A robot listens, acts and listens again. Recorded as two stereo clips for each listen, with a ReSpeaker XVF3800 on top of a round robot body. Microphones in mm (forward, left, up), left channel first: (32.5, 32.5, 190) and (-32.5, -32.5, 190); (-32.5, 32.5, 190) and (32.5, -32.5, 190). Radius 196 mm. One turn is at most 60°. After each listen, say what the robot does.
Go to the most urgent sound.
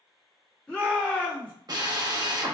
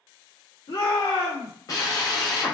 Turn 60° left.
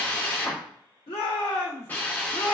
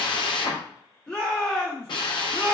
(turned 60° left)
Turn 55° left.
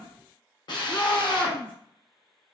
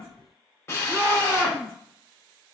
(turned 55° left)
Turn 15° left.
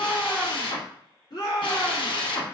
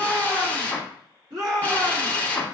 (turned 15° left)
Drive 1.0 m forward.
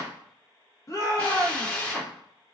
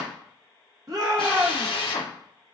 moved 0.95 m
Drive 1.0 m forward.
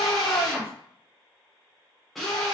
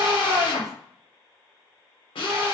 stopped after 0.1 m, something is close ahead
I am next to the shout.